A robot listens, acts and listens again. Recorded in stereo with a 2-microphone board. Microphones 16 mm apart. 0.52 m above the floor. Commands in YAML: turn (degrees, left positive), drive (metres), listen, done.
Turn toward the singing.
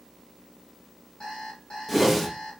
listen: true
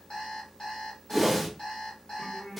turn: 40
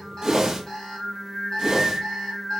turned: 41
done: "Found it: singing, straight ahead, 1 to 2 m away."